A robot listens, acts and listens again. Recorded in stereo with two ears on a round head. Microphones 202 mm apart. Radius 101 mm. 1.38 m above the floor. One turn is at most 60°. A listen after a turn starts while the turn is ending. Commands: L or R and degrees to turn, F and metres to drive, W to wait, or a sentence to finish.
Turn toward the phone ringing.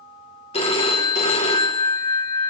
L25
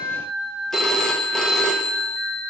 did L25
Found it: a phone ringing, straight ahead, under 1 m away.